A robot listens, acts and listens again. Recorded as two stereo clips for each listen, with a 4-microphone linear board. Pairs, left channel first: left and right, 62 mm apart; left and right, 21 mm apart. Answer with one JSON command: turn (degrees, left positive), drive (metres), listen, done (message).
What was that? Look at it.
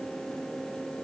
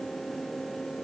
{"listen": true}
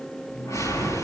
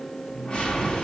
{"turn": 55}
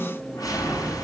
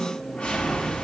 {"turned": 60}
{"turn": 65}
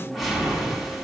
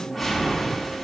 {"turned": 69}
{"done": "Found it: a whoosh, straight ahead, over 4 m away."}